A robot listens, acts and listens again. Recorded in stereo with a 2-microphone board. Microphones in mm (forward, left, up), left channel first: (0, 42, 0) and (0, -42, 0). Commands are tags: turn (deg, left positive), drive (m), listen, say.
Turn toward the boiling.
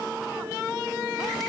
<listen/>
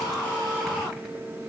<listen/>
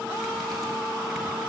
<say>I can't make out boiling to turn to.</say>